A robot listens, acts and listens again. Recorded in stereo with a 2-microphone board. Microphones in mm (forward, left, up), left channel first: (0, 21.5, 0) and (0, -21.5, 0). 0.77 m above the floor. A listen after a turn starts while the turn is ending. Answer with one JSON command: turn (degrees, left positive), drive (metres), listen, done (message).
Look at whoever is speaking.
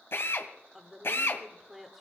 {"turn": -30}
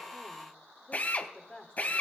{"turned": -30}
{"turn": 25}
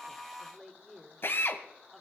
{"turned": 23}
{"done": "Facing the woman speaking, 1 to 2 m away."}